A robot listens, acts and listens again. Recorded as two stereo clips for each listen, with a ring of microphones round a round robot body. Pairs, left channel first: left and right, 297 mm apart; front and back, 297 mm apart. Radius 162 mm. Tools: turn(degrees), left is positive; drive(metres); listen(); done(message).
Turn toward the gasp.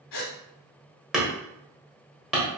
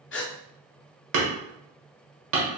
turn(degrees=55)
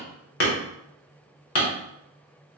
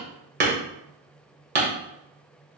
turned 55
done("I heard a gasp from this way, but can't make it out now.")